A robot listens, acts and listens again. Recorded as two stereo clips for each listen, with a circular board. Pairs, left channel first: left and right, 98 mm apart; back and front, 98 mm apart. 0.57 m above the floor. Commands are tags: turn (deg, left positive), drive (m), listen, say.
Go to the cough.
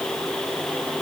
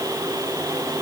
<listen/>
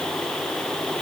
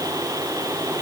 <listen/>
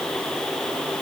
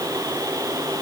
<say>I can't make out a cough to turn to.</say>